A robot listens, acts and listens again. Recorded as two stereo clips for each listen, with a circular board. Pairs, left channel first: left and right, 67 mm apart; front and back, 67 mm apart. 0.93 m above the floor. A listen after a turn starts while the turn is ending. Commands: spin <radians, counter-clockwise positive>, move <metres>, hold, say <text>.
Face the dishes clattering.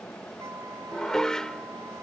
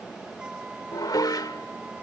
spin 0.17
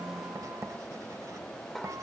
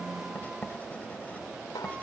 say Facing the dishes clattering.